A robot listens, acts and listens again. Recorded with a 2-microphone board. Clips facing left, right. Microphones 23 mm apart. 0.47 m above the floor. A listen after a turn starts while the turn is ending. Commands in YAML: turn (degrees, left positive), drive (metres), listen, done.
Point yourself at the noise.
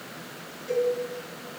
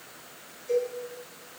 turn: 30
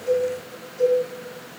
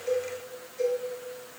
done: "Found it: a cowbell, straight ahead."